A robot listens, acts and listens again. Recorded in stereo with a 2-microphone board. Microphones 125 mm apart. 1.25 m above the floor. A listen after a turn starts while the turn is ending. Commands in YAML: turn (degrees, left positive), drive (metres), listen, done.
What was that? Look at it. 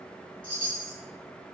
turn: 40
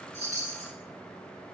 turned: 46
turn: 85
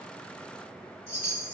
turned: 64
turn: 20
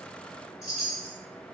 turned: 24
done: "Found it: a chime, straight ahead."